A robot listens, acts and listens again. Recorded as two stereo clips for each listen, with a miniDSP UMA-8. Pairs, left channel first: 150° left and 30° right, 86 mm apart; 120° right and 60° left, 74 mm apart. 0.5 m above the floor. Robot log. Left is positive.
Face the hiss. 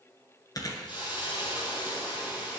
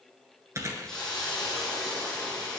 note: The hiss: 160° left.
cmd yaw +160
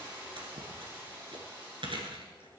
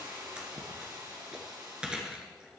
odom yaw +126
note: The hiss is now 35° left.
cmd yaw +35
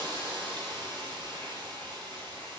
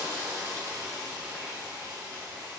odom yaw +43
end: Found it: a hiss, straight ahead, over 4 m away.